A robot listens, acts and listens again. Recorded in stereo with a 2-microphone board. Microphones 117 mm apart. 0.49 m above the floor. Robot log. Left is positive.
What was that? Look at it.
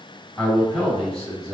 cmd yaw +30
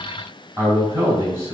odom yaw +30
note: So it is at 30° right.
cmd yaw -30
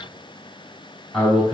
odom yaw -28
end: Found it: a man speaking, straight ahead, 2 to 4 m away.